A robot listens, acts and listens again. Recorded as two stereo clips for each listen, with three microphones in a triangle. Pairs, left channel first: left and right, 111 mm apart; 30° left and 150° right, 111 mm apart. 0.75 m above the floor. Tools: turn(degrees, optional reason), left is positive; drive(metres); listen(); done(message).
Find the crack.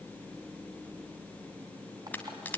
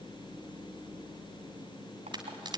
turn(degrees=165, reason="The crack: 165° left.")
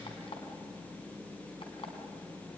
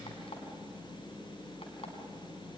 done("I heard a crack from this way, but can't make it out now.")